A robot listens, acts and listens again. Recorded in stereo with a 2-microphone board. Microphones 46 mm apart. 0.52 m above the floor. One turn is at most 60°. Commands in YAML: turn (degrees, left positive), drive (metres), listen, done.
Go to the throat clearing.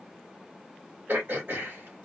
turn: -55
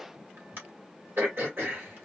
turn: -60
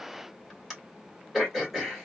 drive: 1.0
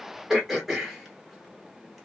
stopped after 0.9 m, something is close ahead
done: "Arrived at the throat clearing, straight ahead."